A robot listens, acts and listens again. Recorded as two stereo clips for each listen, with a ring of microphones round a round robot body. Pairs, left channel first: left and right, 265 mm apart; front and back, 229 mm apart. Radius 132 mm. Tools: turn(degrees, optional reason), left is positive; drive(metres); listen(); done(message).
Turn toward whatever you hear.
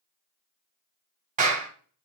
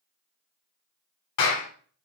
turn(degrees=-30, reason="The clap: 30° right.")
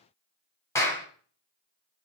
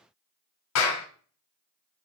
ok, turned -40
turn(degrees=10, reason="The clap is now 10° left.")
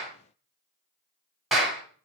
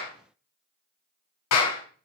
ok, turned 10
done("Found it: a clap, straight ahead, 2 to 4 m away.")